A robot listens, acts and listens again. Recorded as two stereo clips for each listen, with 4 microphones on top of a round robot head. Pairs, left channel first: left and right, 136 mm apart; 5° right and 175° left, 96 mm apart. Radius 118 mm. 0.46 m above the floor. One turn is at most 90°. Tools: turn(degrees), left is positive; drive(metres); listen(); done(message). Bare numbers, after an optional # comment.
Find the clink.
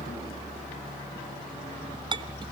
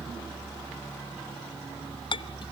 # The clink: 35° right.
turn(-35)
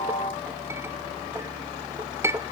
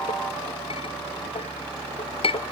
# The clink is now 20° right.
turn(-20)
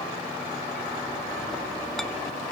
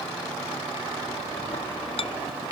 done("Found it: a clink, straight ahead, under 1 m away.")